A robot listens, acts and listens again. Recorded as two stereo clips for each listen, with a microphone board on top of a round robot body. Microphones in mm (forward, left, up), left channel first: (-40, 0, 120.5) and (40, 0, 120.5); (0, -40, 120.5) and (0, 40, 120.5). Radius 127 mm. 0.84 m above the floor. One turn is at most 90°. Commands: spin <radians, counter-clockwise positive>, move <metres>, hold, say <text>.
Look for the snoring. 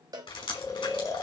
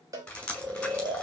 spin 1.57
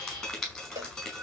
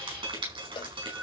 spin 0.70
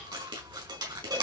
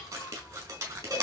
hold
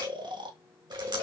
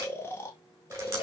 spin -0.52
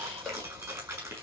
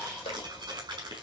hold
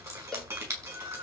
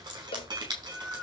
spin -0.17
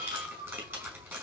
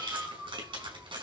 say Found it: snoring, straight ahead, 2 to 4 m away.